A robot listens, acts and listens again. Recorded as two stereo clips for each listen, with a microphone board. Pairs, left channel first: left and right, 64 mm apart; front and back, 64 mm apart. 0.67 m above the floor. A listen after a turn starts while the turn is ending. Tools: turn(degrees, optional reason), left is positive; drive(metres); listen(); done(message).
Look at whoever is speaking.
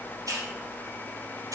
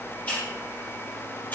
listen()
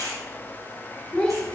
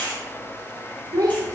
turn(degrees=165, reason="The child speaking: 165° left.")
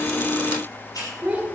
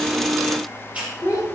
turn(degrees=-25, reason="The child speaking is now 25° right.")
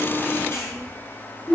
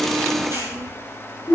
done("Found it: a child speaking, straight ahead, 1 to 2 m away.")